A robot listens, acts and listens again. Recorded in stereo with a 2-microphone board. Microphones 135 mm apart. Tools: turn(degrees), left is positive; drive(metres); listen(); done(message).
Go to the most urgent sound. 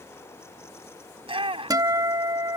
turn(degrees=-45)
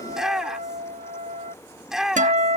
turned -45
drive(metres=1.0)
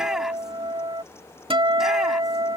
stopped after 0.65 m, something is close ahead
listen()
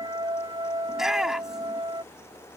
done("Blocked. The shout is further on, straight ahead.")